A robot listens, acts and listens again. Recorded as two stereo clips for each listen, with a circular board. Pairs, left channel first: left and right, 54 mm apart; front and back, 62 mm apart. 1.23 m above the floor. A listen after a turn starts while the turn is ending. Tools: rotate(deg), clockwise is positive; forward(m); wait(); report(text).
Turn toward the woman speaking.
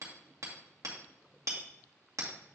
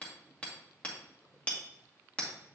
wait()
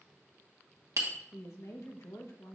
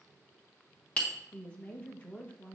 rotate(-65)
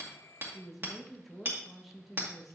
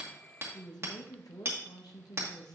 report("Facing the woman speaking, 1 to 2 m away.")